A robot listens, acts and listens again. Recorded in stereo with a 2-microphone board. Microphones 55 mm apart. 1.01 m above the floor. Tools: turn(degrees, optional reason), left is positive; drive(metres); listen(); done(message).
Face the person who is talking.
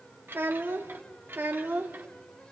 turn(degrees=-40, reason="The child speaking: about 40° right or 140° right.")
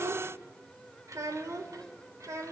turn(degrees=-105, reason="So it is at 105° right.")
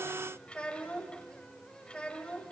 turn(degrees=20, reason="The child speaking is now 20° left.")
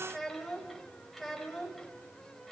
done("Found it: a child speaking, straight ahead.")